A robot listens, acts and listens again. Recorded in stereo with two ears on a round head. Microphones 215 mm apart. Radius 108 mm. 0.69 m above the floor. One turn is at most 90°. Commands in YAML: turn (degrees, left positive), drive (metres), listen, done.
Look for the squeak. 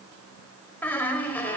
turn: 30
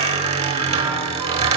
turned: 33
turn: -25
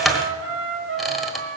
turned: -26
done: "Found it: a squeak, straight ahead, 1 to 2 m away."